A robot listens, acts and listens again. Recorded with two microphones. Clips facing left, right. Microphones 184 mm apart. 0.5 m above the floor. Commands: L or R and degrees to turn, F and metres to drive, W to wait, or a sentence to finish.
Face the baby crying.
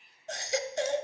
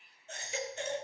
L90
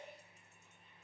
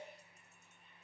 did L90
W
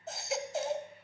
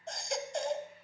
Facing the baby crying.